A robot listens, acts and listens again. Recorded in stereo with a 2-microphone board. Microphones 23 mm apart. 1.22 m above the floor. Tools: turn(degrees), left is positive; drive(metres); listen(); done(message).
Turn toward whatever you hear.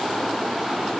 listen()
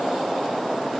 listen()
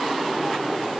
done("I can't make out anything.")